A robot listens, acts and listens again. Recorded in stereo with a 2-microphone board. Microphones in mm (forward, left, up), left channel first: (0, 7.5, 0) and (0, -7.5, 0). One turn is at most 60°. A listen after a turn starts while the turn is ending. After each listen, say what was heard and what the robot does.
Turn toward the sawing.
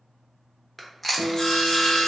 The sawing: about 50° left or 130° left. Turn 50° left.
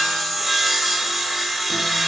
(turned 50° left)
Facing the sawing, under 1 m away.